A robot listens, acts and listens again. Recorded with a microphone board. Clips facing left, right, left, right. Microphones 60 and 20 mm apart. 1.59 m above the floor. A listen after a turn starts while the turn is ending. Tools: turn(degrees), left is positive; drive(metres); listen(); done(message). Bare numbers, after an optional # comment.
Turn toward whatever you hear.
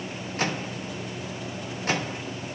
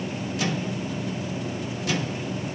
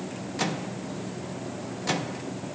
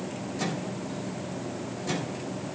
# The microwave: about 40° left or 140° left.
turn(40)
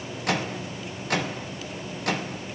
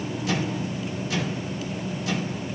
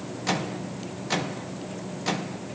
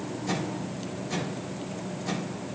# So it is at 90° left.
turn(90)
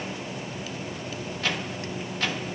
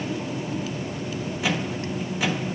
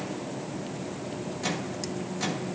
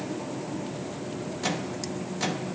# The microwave is now 10° right.
turn(-10)
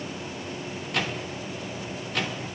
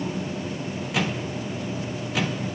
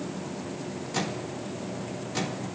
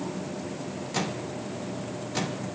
done("Found it: a microwave, straight ahead.")